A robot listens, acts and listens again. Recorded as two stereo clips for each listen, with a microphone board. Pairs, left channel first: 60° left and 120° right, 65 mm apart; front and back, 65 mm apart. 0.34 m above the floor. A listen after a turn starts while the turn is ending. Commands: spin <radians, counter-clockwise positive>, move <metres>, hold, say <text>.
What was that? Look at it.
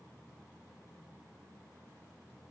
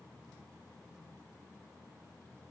hold
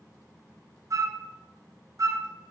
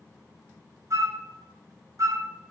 spin -2.53
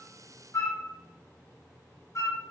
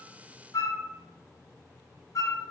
spin 0.44
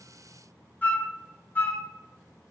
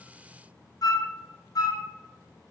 say Facing the flute, 1 to 2 m away.